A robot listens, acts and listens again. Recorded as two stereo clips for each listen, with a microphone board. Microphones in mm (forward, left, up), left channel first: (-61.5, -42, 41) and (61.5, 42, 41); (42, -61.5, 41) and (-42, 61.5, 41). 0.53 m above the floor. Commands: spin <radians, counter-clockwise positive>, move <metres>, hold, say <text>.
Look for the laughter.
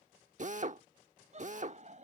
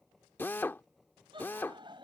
spin 1.22
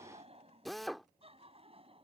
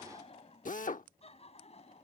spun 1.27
spin -0.26
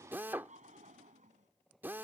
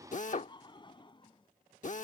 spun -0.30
say Found it: laughter, straight ahead.